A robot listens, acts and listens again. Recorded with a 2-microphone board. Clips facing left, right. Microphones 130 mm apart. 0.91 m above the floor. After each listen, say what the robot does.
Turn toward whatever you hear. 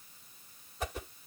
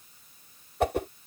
Turn 65° right.
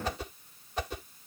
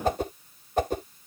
Turn 50° right.
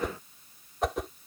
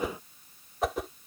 Facing the whoosh.